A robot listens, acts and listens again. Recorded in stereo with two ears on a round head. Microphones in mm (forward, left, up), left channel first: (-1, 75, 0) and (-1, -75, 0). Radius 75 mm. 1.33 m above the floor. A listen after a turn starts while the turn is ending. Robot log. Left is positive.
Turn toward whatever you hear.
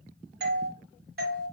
note: The doorbell: about 60° right or 120° right.
cmd yaw -60
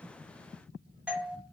end: Found it: a doorbell, straight ahead, 1 to 2 m away.